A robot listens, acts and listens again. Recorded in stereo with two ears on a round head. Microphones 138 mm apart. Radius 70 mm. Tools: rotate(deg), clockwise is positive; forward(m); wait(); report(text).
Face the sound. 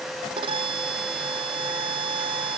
rotate(35)
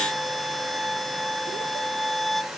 report("Facing the violin.")